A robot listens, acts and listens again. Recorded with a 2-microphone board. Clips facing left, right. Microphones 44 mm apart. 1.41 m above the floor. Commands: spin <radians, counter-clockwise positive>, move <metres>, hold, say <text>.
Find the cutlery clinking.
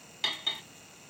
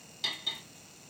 spin 0.87
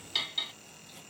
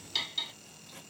spin 0.26
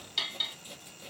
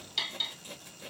say Found it: cutlery clinking, straight ahead, under 1 m away.